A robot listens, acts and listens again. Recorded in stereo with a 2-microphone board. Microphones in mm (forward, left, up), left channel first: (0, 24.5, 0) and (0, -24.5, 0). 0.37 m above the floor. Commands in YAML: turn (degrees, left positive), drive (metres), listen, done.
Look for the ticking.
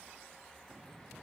listen: true
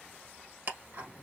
turn: -40
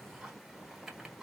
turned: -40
done: "Found it: ticking, straight ahead, 1 to 2 m away."